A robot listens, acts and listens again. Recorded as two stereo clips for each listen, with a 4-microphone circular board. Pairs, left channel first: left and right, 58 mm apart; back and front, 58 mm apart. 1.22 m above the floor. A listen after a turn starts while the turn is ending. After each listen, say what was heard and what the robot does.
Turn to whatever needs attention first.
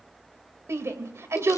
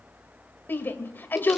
The shout: 125° right. Turn 125° right.
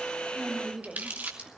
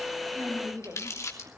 Keep listening.
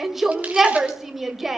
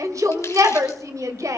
Facing the shout.